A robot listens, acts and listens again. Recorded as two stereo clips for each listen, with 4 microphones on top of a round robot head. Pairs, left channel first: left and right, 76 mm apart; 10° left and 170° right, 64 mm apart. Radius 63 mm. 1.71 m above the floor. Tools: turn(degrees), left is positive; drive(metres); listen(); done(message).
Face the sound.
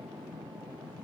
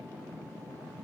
listen()
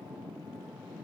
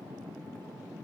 listen()
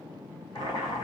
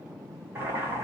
turn(degrees=140)
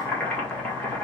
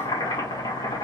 turn(degrees=15)
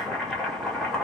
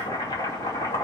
done("Found it: boiling, straight ahead.")